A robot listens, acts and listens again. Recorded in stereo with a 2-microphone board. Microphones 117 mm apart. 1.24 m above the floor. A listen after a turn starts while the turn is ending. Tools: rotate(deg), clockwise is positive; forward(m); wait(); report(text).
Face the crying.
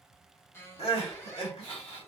rotate(-50)
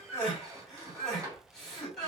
report("Facing the crying.")